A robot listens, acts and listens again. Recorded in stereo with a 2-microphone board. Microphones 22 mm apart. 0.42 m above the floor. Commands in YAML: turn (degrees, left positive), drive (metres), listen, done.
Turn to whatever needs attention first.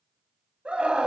turn: -55
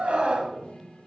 turn: -70
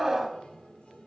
turn: -20
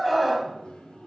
turn: -15
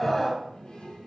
done: "Facing the scream, 2 to 4 m away."